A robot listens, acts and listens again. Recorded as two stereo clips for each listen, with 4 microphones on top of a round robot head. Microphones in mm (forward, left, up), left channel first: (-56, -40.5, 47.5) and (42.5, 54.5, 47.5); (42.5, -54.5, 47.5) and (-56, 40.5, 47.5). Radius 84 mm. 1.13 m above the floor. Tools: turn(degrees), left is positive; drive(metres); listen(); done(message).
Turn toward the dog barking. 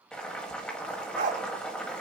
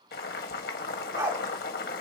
turn(degrees=70)
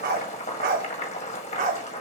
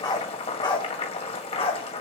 done("Found it: a dog barking, straight ahead, 1 to 2 m away.")